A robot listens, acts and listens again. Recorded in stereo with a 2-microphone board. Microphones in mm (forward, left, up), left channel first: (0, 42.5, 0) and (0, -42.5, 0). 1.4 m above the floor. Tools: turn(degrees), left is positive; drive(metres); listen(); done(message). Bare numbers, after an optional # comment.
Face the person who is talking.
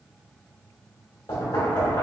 listen()
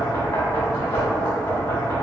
listen()
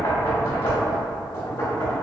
done("I can't make out anyone speaking, only knocking.")